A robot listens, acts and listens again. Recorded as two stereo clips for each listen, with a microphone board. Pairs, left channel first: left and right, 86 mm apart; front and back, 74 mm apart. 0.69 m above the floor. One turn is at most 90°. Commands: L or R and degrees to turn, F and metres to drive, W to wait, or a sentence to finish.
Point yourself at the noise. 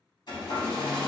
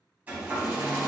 L90
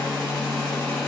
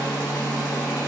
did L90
Facing the hair dryer.